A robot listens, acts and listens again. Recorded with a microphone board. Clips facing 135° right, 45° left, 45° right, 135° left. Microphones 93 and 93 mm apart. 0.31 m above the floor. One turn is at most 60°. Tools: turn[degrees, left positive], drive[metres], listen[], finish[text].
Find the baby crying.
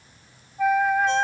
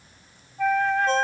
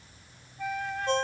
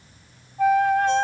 Action: listen[]
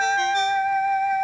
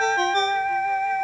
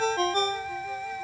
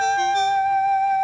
Action: listen[]
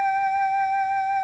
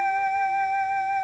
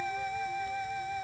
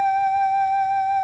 Action: finish[I can't make out a baby crying to turn to.]